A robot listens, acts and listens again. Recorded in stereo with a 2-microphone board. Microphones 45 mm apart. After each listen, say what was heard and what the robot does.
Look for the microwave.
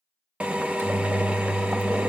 Turn 90° right.
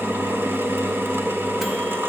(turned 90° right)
Keep listening.
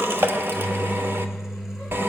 The microwave is now 10° right. Turn 10° right.
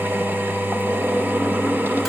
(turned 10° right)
Keep listening.
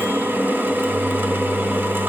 Keep listening.
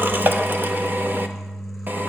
Found it: a microwave, straight ahead, 1 to 2 m away.